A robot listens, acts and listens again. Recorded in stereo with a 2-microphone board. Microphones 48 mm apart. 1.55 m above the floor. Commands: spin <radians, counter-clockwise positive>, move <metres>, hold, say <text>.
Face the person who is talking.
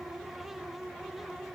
hold
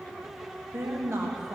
spin -1.13
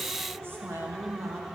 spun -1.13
spin -0.87
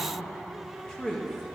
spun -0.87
spin 0.26
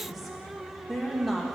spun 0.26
say Facing the woman speaking.